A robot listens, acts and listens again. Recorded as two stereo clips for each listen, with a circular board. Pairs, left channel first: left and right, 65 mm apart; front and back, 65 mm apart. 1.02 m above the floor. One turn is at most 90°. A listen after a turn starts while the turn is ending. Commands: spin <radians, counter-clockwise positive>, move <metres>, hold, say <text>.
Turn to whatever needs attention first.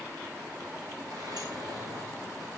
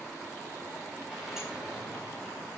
hold
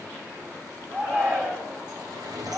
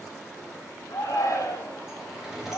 spin -0.70
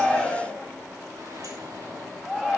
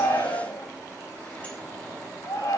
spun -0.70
spin -0.26
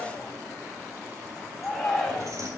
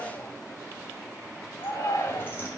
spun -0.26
say Found it: a shout, straight ahead, over 4 m away.